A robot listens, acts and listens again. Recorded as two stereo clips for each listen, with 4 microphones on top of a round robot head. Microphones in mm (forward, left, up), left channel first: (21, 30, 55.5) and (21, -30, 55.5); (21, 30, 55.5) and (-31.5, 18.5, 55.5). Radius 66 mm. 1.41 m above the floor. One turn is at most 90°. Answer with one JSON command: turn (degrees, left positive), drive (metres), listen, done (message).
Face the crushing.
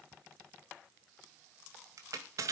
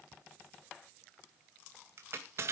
{"turn": -90}
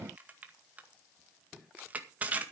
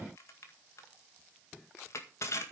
{"turn": -25}
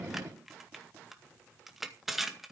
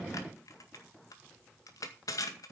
{"done": "Found it: crushing, straight ahead."}